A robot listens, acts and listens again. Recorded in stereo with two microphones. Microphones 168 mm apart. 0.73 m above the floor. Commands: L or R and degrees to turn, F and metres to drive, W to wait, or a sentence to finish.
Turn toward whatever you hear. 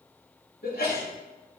L70
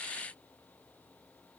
W
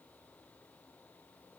I heard a sneeze, but can't make it out now. It was about straight ahead or 40° left.